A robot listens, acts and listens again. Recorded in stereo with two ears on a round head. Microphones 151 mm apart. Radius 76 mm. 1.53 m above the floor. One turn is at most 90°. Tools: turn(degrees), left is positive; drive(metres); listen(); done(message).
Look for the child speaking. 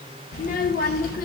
turn(degrees=55)
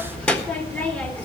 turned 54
turn(degrees=10)
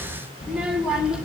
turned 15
done("Facing the child speaking.")